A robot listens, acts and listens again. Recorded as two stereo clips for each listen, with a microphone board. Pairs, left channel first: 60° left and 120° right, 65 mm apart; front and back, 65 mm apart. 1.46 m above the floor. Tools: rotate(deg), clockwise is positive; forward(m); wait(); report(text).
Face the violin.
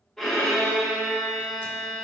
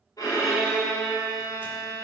rotate(25)
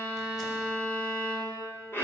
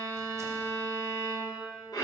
report("Found it: a violin, straight ahead.")